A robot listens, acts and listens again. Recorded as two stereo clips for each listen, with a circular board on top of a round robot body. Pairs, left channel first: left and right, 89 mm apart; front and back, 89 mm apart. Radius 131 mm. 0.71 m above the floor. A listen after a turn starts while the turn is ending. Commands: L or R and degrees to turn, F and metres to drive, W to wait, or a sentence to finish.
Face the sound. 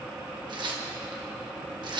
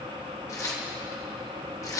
R55
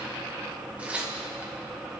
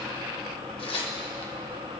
R15
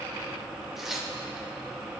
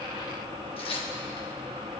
Facing the tearing paper.